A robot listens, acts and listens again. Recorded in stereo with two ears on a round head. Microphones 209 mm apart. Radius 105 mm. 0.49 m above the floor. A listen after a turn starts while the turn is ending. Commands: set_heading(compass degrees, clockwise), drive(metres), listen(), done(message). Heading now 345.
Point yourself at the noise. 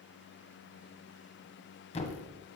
set_heading(320)
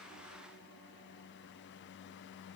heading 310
listen()
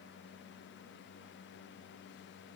done("I heard a thud, but can't make it out now. It was about 10° right or 120° left.")